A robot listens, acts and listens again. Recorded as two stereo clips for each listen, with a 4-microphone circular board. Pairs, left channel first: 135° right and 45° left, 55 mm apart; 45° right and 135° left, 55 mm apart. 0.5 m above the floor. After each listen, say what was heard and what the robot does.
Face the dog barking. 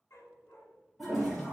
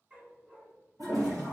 The dog barking: 170° right. Turn 170° right.
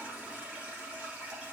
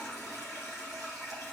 Keep listening.
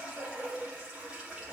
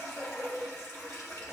The dog barking is now 15° right. Turn 15° right.
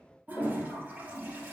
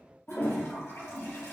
Keep listening.
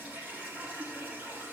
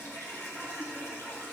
Keep listening.
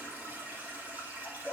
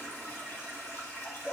The dog barking is now 10° right. Turn 10° right.
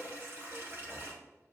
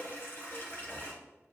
Keep listening.
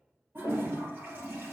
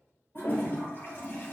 Keep listening.
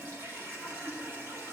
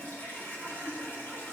I heard a dog barking from this way, but can't make it out now.